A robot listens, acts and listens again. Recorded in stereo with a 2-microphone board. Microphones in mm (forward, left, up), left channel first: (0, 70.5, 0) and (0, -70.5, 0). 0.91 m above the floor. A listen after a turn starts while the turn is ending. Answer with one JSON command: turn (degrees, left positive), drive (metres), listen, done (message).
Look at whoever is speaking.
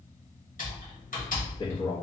{"turn": 35}
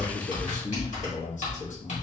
{"turn": 105}
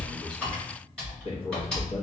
{"turn": 50}
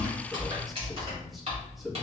{"done": "Facing the man speaking, under 1 m away."}